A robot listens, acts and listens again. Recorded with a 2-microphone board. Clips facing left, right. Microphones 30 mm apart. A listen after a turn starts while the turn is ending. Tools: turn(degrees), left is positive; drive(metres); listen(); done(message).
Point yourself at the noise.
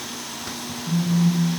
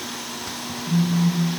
turn(degrees=30)
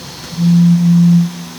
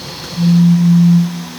turn(degrees=115)
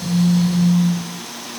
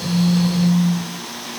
turn(degrees=-25)
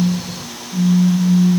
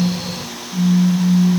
done("Found it: a phone buzzing, straight ahead.")